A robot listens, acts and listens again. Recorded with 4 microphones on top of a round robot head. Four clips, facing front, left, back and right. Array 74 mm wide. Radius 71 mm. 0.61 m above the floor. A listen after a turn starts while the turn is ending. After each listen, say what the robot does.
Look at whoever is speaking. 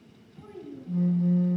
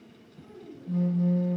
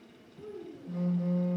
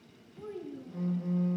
Turn 35° right.
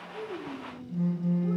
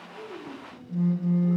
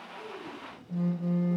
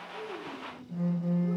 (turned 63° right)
Turn 30° left.
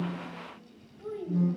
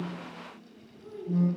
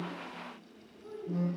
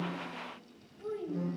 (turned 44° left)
Turn 30° right.
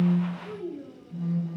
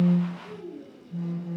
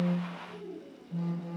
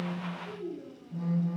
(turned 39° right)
Found it: a child speaking, straight ahead, 2 to 4 m away.